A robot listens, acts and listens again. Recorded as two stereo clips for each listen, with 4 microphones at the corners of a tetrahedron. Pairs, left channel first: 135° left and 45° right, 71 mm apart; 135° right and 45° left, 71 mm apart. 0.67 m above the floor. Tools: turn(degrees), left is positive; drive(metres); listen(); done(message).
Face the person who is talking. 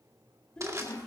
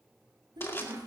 turn(degrees=55)
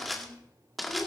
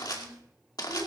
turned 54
done("Found it: a child speaking, straight ahead.")